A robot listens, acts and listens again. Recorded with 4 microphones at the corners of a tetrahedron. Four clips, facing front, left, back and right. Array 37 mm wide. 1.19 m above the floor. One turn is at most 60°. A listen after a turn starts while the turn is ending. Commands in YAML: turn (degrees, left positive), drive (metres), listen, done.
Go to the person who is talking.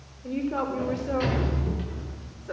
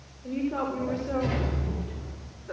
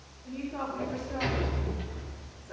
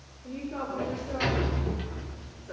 turn: 15
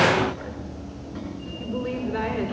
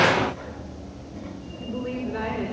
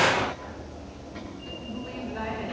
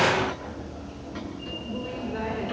drive: 1.0
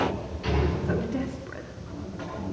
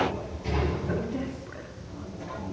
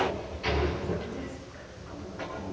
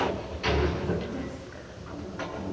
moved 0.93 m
listen: true
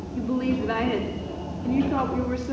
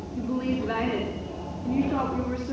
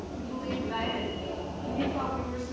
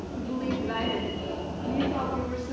drive: 1.0
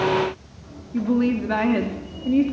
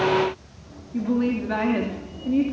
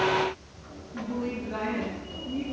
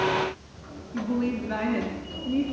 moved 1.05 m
turn: 10
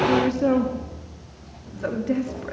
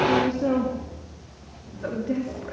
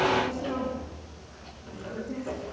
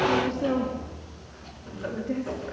drive: 1.0
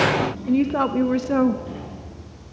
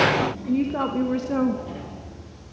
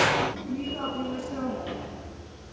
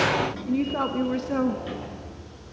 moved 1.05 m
turn: -10
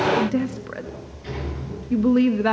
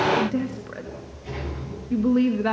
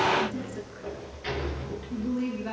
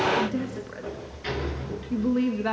drive: 1.0
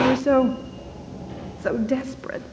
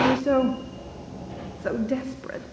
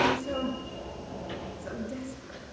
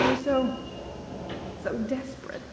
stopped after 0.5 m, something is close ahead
done: "I am next to the woman speaking."